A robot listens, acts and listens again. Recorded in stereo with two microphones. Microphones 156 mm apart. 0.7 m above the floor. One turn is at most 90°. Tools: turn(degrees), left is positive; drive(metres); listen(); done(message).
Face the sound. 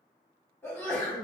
turn(degrees=30)
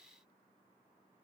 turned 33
listen()
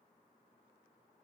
done("I heard a sneeze, but can't make it out now. It was about 20° right or 130° left.")